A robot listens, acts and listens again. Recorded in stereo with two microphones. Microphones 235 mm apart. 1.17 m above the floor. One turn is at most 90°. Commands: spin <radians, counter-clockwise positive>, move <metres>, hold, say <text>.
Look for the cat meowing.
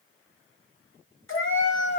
spin 0.87
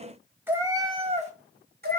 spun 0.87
spin -0.79
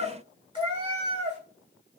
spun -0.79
spin -0.52
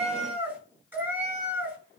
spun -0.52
spin -0.17
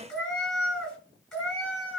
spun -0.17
say Found it: a cat meowing, straight ahead, 2 to 4 m away.